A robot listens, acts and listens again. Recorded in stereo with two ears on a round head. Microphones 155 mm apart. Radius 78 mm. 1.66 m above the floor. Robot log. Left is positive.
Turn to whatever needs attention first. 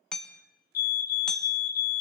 note: The fire alarm: about 55° left or 125° left.
cmd yaw +55
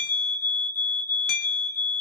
note: So it is at 15° left.
cmd yaw +15
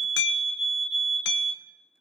end: Facing the fire alarm.